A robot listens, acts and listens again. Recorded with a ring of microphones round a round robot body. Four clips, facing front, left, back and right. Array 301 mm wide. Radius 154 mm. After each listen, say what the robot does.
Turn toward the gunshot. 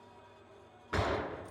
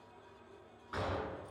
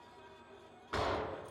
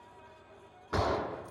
Turn 70° right.
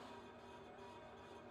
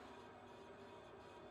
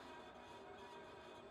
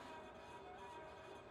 I heard a gunshot from this way, but can't make it out now.